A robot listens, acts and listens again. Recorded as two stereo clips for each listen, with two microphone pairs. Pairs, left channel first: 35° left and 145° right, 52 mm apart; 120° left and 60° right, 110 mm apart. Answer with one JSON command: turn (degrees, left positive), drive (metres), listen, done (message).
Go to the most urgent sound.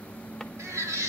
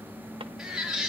{"turn": -145}
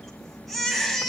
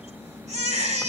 {"turn": -55}
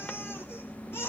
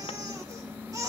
{"drive": 1.0}
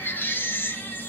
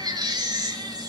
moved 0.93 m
{"turn": -10}
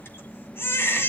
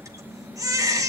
{"drive": 1.0}
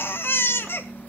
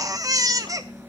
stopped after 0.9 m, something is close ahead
{"done": "I am next to the baby crying."}